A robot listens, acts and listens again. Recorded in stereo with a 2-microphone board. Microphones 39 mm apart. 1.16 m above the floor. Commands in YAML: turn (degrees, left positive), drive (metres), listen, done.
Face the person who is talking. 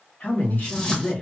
turn: 45
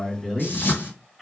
done: "Facing the man speaking."